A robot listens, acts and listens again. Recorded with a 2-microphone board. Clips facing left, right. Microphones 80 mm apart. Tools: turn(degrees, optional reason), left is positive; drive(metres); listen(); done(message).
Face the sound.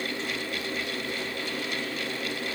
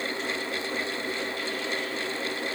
listen()
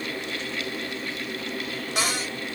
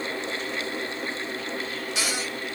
turn(degrees=50, reason="The cupboard door: about 50° left or 130° left.")
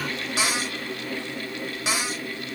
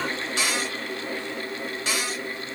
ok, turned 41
turn(degrees=15, reason="So it is at 15° left.")
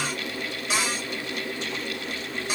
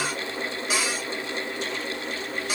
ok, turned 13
done("Facing the cupboard door, 2 to 4 m away.")